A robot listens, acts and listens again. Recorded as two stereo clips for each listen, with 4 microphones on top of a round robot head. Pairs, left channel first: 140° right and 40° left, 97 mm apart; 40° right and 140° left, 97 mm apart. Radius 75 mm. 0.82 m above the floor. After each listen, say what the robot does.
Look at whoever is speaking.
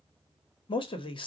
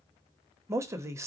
Turn 160° right.
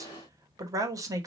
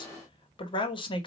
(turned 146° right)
Turn 10° right.
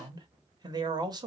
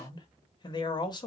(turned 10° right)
Facing the man speaking, 1 to 2 m away.